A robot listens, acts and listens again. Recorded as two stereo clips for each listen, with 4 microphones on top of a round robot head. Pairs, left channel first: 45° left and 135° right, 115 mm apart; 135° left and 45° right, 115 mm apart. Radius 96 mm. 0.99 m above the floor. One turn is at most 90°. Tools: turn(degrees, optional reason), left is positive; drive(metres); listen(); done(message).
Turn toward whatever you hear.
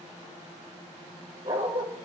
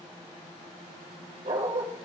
turn(degrees=-85, reason="The dog barking: 85° right.")
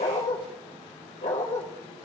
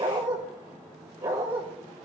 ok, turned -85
turn(degrees=15, reason="The dog barking is now 15° left.")
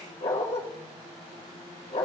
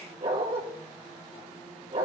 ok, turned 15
done("Facing the dog barking, 1 to 2 m away.")